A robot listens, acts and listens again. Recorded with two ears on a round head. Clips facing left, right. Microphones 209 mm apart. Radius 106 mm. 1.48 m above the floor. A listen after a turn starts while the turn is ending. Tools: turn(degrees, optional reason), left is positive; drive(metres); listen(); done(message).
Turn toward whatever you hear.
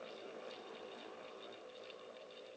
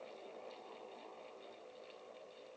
listen()
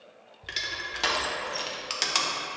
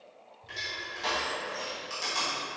turn(degrees=70, reason="The crushing: about 70° left or 110° left.")
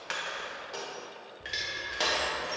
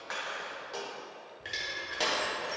done("Facing the crushing.")